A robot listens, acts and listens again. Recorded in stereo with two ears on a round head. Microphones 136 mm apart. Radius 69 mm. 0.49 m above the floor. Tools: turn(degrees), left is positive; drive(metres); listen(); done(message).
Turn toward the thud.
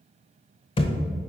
turn(degrees=35)
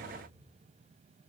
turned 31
listen()
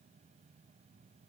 done("I heard a thud, but can't make it out now. It was about 5° left or 110° left.")